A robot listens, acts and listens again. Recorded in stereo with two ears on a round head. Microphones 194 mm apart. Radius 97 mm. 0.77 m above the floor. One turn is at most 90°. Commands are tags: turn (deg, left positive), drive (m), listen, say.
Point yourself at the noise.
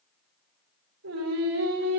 <turn deg="-90"/>
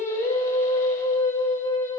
<turn deg="15"/>
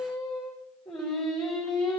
<say>Facing the singing, over 4 m away.</say>